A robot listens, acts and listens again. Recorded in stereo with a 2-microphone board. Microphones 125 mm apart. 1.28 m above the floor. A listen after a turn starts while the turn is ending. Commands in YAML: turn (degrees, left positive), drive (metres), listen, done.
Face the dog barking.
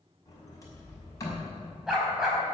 turn: -30
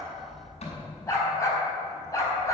turn: 30
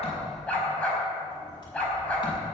turn: 10
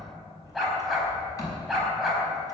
done: "Facing the dog barking."